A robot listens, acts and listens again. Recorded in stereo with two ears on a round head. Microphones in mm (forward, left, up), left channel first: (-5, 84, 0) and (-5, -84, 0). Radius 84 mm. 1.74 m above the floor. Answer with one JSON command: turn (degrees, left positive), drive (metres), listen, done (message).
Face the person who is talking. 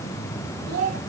{"turn": -90}
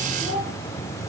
{"done": "Facing the child speaking, over 4 m away."}